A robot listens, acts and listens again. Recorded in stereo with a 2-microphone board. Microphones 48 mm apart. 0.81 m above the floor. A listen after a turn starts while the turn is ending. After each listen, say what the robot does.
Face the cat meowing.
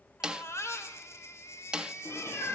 Turn 60° left.
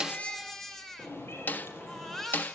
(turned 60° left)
Turn 55° left.
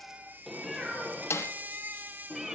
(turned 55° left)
Facing the cat meowing, over 4 m away.